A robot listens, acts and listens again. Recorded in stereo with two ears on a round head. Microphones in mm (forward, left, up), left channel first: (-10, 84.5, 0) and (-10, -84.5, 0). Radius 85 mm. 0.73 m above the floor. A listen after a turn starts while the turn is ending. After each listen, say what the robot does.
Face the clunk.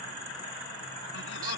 Keep listening.
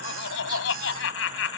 Keep listening.
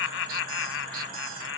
I can't make out a clunk to turn to.